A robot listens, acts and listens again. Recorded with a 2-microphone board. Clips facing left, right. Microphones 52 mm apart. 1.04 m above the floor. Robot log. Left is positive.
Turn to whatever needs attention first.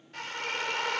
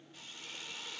cmd idle
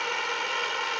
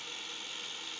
cmd idle
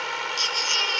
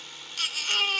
cmd yaw -30
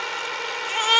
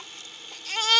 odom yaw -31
note: So it is at 20° left.
cmd yaw +20
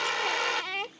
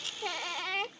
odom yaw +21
end: Found it: a baby crying, straight ahead.